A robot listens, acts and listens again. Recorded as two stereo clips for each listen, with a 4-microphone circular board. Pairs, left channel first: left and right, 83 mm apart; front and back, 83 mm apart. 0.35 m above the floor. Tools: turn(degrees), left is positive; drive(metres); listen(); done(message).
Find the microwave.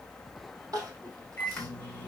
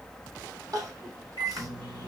turn(degrees=160)
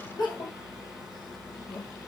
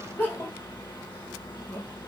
done("Facing the microwave, 2 to 4 m away.")